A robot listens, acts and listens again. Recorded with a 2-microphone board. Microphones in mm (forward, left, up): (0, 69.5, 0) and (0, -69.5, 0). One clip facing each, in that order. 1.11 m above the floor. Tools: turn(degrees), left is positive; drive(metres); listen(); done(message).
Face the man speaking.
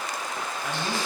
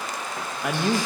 turn(degrees=-70)
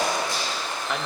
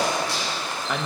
done("Facing the man speaking.")